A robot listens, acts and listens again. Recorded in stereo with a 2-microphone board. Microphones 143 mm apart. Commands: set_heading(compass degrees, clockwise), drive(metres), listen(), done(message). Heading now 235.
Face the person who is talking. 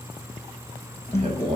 set_heading(285)
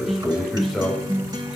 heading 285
done("Found it: a man speaking, straight ahead.")